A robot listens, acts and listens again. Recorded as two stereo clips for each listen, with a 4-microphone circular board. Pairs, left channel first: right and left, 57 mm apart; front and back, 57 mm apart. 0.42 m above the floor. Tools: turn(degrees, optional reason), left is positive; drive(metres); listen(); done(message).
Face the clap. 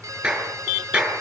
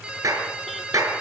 turn(degrees=165, reason="The clap: 165° left.")
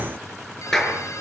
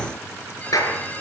done("Facing the clap.")